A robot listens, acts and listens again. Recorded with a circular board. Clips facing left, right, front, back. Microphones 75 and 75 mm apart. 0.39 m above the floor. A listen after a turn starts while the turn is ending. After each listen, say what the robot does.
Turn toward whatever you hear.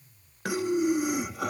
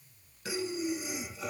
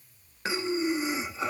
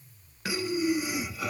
Turn 65° left.
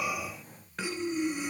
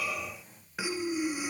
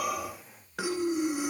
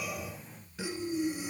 Found it: breathing, straight ahead, under 1 m away.